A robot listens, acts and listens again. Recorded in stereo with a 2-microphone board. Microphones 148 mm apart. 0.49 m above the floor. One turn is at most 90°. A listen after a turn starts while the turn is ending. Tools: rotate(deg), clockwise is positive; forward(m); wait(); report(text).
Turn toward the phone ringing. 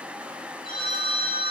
rotate(-90)
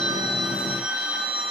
rotate(10)
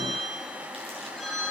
report("Facing the phone ringing, over 4 m away.")